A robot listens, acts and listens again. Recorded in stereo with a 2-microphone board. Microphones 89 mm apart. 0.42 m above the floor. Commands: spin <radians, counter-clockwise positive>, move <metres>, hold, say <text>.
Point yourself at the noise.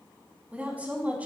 spin -0.35
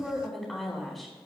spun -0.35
say Facing the woman speaking.